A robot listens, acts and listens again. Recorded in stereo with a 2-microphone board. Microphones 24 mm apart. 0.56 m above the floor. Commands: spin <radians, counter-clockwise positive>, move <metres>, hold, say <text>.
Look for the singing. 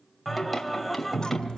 spin 0.52
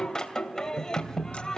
spin 2.62
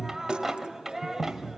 spin -0.26
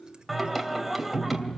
say Found it: singing, straight ahead, 2 to 4 m away.